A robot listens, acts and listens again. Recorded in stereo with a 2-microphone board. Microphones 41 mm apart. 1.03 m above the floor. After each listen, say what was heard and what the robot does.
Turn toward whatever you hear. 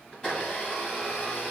The blender: about 20° left or 160° left. Turn 20° left.
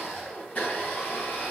So it is at 140° left. Turn 140° left.
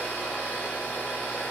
The blender is now 50° left. Turn 50° left.
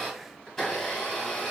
The blender is now 10° left. Turn 10° left.
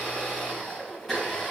Found it: a blender, straight ahead, 1 to 2 m away.